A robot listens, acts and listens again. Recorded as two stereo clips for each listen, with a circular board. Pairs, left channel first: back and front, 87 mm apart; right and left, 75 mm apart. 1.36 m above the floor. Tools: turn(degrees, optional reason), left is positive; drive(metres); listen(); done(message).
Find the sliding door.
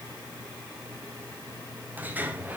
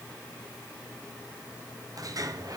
turn(degrees=65, reason="The sliding door: 65° left.")
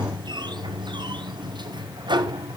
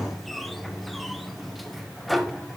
done("Facing the sliding door, under 1 m away.")